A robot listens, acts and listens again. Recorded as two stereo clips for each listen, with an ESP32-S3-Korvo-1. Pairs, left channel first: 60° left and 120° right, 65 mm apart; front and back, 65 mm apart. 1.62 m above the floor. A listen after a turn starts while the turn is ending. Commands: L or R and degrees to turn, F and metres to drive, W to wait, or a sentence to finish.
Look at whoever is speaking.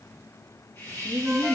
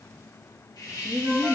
R160
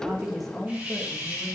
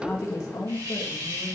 R25
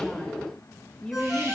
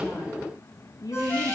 R20
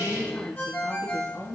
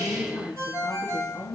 R10
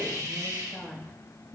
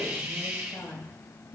Facing the woman speaking, 2 to 4 m away.